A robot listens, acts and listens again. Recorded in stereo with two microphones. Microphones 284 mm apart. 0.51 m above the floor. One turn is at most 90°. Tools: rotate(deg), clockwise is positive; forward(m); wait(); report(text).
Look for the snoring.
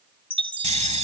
rotate(25)
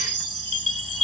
wait()
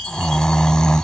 report("Facing the snoring.")